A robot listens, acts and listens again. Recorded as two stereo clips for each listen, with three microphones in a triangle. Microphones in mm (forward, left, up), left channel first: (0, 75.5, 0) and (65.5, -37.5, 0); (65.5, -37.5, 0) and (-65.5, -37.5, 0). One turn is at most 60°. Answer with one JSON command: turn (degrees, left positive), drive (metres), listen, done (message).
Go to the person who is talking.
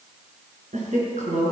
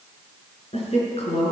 {"turn": -40}
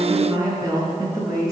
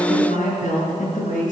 {"drive": 1.0}
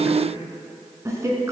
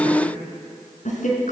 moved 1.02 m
{"drive": 1.0}
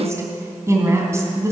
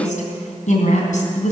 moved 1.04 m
{"turn": 10}
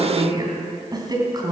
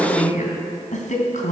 {"drive": 1.0}
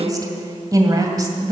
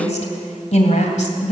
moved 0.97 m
{"drive": 1.0}
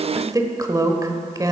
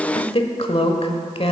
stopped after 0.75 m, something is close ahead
{"done": "I am next to the woman speaking."}